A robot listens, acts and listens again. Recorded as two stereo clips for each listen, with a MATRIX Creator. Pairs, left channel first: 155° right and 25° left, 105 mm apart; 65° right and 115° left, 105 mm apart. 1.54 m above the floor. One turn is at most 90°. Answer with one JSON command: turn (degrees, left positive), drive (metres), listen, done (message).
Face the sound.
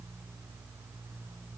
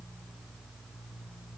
{"listen": true}
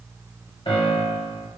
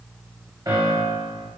{"turn": 90}
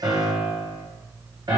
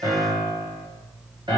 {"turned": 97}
{"turn": 70}
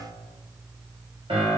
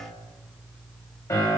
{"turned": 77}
{"done": "Facing the piano."}